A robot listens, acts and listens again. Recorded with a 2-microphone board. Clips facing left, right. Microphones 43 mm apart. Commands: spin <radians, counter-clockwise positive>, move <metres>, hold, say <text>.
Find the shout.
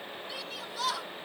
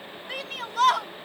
spin -0.96
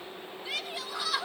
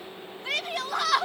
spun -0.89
spin -1.22
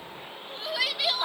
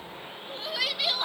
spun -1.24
say Found it: a shout, straight ahead, under 1 m away.